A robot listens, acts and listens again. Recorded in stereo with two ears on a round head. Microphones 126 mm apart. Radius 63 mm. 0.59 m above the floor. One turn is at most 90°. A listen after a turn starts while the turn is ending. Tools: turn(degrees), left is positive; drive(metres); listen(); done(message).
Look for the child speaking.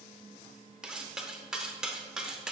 listen()
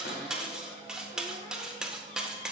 listen()
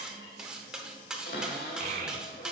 turn(degrees=-55)
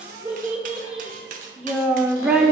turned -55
turn(degrees=-10)
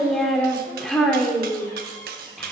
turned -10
done("Found it: a child speaking, straight ahead, 1 to 2 m away.")